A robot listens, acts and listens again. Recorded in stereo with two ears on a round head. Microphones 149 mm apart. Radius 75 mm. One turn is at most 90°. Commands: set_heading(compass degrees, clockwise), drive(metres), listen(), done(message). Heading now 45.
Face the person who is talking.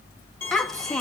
set_heading(15)
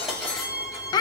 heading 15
set_heading(285)
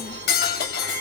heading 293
set_heading(228)
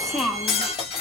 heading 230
done("Facing the child speaking.")